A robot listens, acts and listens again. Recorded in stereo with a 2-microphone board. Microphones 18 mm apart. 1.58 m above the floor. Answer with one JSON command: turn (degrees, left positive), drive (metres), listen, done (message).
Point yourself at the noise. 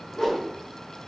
{"turn": 40}
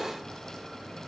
{"listen": true}
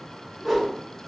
{"done": "Found it: a whoosh, straight ahead, 1 to 2 m away."}